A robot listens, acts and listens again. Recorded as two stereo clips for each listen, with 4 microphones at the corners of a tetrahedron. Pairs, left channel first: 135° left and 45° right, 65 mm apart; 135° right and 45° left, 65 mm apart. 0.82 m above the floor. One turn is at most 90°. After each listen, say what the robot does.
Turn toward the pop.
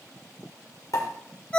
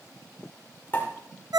Turn 90° left.
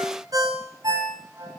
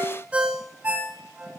Turn 75° left.
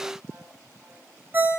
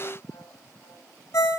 Facing where the pop came from. I can't hear it now.